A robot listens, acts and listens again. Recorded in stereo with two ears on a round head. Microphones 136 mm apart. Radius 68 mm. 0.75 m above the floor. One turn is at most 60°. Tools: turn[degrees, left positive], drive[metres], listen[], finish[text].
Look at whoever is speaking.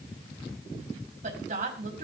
Thought: The woman speaking: about 50° right or 130° right.
Action: turn[-50]
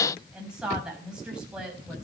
Action: finish[Found it: a woman speaking, straight ahead.]